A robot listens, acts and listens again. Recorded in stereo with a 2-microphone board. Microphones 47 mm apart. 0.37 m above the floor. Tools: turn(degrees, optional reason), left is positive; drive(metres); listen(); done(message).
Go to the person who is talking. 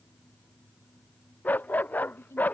turn(degrees=65, reason="The woman speaking: about 65° left or 115° left.")
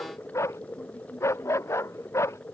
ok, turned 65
listen()
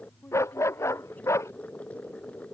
turn(degrees=40, reason="So it is at 40° left.")
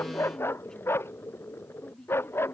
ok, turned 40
turn(degrees=15, reason="The woman speaking is now 15° left.")
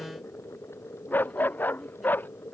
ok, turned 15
listen()
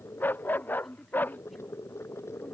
drive(metres=1.0)
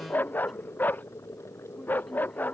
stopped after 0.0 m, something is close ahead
listen()
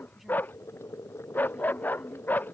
listen()
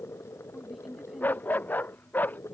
done("Something is in my way. I am facing the woman speaking but have not reached it.")